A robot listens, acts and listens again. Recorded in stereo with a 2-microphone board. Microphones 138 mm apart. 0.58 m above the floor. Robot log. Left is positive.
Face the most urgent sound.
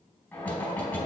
cmd idle
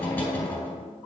cmd idle
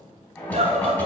note: The scream: about 55° right or 125° right.
cmd yaw -55
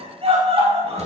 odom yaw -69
note: So it is at 45° right.
cmd yaw -45
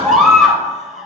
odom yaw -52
end: Found it: a scream, straight ahead.